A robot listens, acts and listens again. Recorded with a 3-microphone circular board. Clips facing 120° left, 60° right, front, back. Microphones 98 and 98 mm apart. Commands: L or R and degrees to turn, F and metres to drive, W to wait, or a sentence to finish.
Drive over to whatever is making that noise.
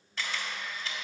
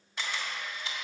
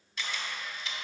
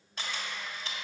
R135
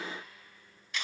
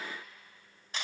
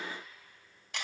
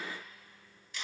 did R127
F1.0
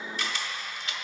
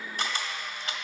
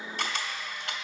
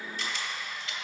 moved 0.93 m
R15
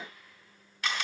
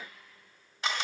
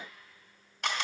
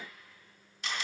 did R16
F1.0
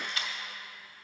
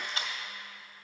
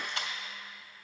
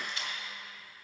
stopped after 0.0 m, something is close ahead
Arrived at the camera shutter, straight ahead.